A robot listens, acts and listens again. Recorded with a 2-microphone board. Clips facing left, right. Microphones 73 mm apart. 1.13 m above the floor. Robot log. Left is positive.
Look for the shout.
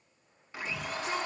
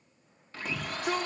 note: The shout: about 60° right or 120° right.
cmd yaw -60
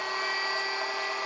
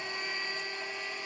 cmd idle
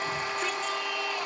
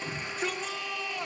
end: Found it: a shout, straight ahead.